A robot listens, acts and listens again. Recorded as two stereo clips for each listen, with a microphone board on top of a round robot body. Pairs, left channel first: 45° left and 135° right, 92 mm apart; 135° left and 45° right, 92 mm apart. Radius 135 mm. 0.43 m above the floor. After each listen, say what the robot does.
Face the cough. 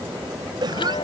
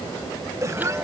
Turn 100° right.
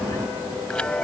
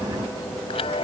Keep listening.
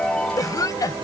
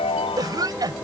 Facing the cough.